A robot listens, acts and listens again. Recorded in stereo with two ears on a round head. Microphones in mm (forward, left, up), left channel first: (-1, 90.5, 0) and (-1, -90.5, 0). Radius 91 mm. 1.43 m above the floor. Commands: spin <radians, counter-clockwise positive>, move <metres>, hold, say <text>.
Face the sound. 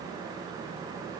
hold
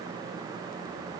hold
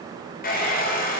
spin 0.79
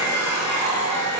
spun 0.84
spin 1.48
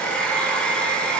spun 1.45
say Found it: a hair dryer, straight ahead.